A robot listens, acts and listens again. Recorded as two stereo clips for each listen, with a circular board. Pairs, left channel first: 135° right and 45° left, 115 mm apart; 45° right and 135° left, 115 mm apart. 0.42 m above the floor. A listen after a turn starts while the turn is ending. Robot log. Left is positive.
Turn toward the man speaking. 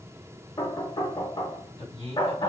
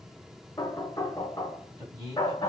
note: The man speaking: 165° right.
cmd yaw -165
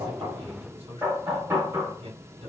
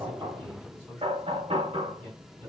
note: The man speaking is now 40° left.
cmd yaw +40
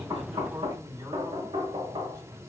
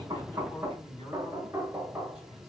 end: Found it: a man speaking, straight ahead, 2 to 4 m away.